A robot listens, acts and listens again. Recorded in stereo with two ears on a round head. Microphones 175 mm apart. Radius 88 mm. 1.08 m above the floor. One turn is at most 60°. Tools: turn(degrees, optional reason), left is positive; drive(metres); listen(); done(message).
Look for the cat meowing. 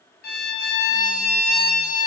listen()
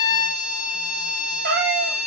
turn(degrees=-50, reason="The cat meowing: about 50° right or 130° right.")
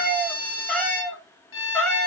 turn(degrees=10, reason="So it is at 10° left.")
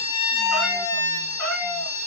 turn(degrees=10, reason="The cat meowing is now 10° left.")
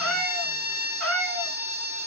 done("Facing the cat meowing, 2 to 4 m away.")